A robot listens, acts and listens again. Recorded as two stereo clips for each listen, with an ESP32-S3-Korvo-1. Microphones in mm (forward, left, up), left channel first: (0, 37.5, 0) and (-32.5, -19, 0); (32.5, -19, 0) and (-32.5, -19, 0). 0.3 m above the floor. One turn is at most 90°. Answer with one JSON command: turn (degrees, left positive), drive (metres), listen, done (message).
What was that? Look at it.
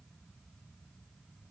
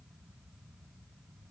{"listen": true}
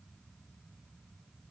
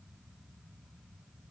{"listen": true}
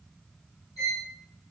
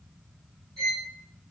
{"turn": 80}
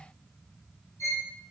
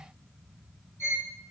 {"turn": 30}
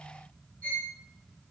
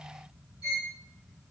{"turn": -10}
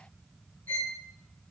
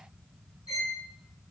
{"done": "Facing the violin."}